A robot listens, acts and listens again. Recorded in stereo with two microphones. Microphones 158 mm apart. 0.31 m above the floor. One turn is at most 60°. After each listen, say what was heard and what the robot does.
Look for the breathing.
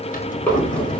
Turn 30° left.
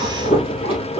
So it is at 145° left. Turn 60° left.
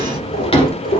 The breathing is now 85° left. Turn 60° left.
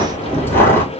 The breathing is now 15° left. Turn 15° left.
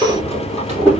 Found it: breathing, straight ahead, 2 to 4 m away.